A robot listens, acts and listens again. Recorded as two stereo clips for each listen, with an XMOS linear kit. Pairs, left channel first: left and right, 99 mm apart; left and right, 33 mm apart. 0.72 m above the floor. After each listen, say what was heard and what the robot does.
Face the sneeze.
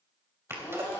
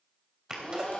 The sneeze: about 25° right or 155° right. Turn 25° right.
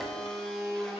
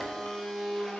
Keep listening.
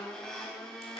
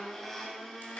I heard a sneeze, but can't make it out now. It was about straight ahead or 130° right.